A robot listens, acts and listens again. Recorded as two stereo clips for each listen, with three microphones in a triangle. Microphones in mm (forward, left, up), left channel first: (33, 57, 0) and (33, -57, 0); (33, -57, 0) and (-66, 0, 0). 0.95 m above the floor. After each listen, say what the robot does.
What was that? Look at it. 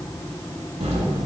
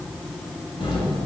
Turn 70° right.
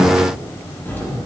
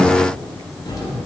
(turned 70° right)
Keep listening.
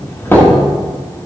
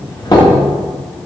Turn 20° left.
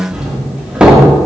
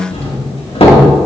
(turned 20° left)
Turn 10° right.
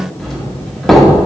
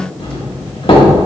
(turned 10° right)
Facing the doorbell, 2 to 4 m away.